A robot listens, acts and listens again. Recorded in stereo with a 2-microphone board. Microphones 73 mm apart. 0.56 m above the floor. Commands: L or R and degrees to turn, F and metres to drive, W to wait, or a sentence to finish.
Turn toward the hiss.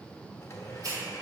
R65
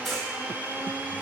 W
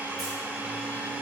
W
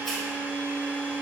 I heard a hiss, but can't make it out now. It was about straight ahead or 50° right.